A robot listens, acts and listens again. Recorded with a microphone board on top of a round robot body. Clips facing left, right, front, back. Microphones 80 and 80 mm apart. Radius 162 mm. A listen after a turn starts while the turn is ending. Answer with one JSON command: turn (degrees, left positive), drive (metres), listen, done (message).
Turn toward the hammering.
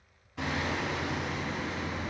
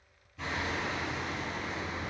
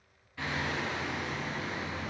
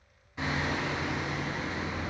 {"turn": 110}
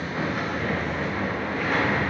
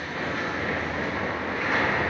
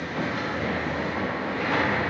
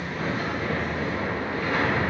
{"done": "Found it: hammering, straight ahead."}